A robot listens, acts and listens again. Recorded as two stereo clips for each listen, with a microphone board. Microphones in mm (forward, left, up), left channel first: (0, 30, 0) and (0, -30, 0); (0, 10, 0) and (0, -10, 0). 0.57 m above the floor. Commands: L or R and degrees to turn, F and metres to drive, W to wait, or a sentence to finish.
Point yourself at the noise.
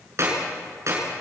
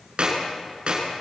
R50
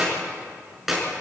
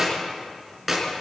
Found it: a clap, straight ahead, over 4 m away.